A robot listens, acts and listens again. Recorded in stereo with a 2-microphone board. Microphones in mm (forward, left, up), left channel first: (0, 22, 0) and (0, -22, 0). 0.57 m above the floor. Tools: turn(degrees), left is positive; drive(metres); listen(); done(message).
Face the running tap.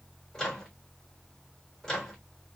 listen()
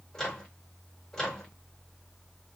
listen()
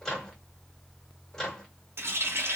turn(degrees=-70)
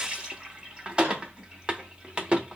turn(degrees=-25)
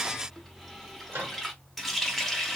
done("Facing the running tap, under 1 m away.")